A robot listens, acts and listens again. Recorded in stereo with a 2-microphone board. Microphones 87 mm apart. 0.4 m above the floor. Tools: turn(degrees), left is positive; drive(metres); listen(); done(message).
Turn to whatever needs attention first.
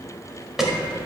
turn(degrees=-30)
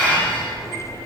listen()
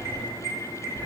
turn(degrees=-145)
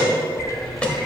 turn(degrees=15)
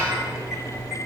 listen()
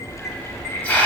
listen()
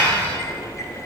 done("I heard an alarm from this way, but can't make it out now.")